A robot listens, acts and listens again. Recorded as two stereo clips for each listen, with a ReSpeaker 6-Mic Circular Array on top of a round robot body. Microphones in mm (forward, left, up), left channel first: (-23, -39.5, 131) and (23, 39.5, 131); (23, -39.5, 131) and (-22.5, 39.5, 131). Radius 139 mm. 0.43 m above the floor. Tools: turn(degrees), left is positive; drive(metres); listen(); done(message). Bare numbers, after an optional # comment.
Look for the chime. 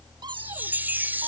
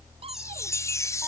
# The chime: 10° right.
turn(-10)
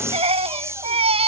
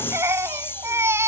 done("Facing the chime.")